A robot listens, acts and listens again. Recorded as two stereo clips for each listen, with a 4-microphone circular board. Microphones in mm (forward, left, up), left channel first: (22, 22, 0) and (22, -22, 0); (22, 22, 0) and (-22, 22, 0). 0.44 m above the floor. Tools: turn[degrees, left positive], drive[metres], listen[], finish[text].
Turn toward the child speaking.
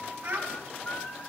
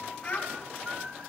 Thought: The child speaking: 50° right.
Action: turn[-50]
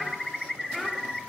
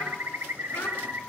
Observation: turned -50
Action: finish[Facing the child speaking.]